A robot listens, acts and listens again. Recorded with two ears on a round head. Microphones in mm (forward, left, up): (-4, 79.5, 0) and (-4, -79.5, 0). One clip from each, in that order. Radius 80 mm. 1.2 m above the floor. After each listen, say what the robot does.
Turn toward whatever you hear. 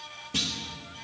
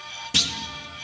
Turn 50° right.
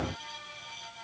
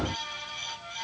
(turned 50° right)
Keep listening.
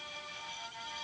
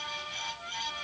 I heard a clunk, but can't make it out now. It was about straight ahead or 80° right.